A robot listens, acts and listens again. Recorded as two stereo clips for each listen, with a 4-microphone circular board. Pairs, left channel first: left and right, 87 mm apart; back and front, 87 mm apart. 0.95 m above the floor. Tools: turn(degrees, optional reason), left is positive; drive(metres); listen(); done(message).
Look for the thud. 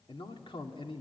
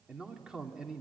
listen()
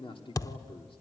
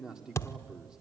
turn(degrees=125, reason="The thud: 125° left.")
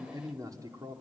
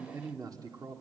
done("Facing where the thud came from. I can't hear it now.")